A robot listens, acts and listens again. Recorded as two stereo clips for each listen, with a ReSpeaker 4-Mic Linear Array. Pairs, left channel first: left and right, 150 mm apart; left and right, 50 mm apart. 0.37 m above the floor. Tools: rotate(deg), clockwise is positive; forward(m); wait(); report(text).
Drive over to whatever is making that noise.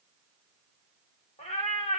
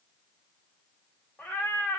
rotate(-55)
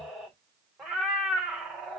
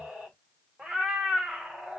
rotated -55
forward(1.0)
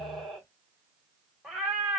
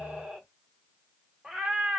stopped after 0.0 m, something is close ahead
report("Something is in my way. I am facing the cat meowing but have not reached it.")